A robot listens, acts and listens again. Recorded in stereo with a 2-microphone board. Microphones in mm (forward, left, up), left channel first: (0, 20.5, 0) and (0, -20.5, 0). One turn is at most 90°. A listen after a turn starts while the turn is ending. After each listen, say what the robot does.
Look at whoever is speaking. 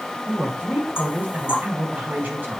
Turn 45° right.
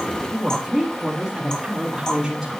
Turn 10° right.
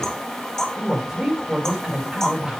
Turn 10° right.
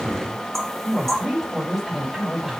Found it: a woman speaking, straight ahead.